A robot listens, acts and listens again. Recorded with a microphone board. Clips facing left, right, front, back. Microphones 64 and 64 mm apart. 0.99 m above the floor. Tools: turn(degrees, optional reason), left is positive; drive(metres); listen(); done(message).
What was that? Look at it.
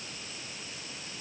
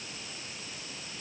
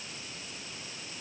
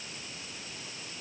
listen()
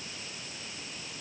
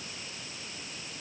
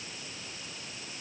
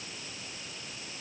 listen()
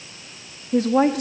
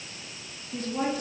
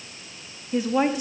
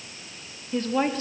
turn(degrees=75, reason="The woman speaking: 75° left.")
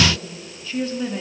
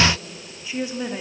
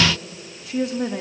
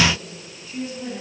turn(degrees=-20, reason="The woman speaking is now 20° right.")
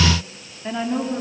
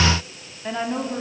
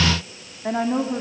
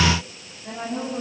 turn(degrees=-10, reason="The woman speaking is now 10° right.")
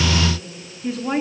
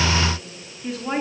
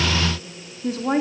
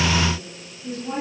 done("Found it: a woman speaking, straight ahead, 2 to 4 m away.")